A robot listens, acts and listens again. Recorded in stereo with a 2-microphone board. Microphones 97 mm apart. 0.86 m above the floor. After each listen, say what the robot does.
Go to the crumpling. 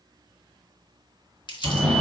Turn 55° left.
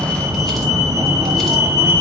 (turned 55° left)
Keep listening.
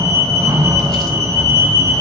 Keep listening.
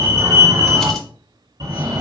I heard crumpling, but can't make it out now. It was about straight ahead or 70° left. I did not reach it.